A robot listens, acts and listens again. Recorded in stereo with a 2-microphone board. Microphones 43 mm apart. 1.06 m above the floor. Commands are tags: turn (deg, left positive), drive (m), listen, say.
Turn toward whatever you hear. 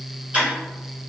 <turn deg="-30"/>
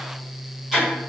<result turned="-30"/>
<say>Facing the ticking, 1 to 2 m away.</say>